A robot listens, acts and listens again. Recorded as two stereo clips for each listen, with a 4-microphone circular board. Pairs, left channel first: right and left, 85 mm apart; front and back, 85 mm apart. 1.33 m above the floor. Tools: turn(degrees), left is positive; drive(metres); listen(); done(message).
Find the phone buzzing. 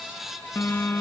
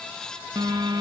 turn(degrees=-150)
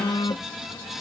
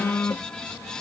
turn(degrees=-65)
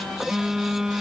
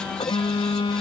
turn(degrees=10)
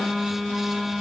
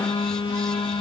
done("Facing the phone buzzing.")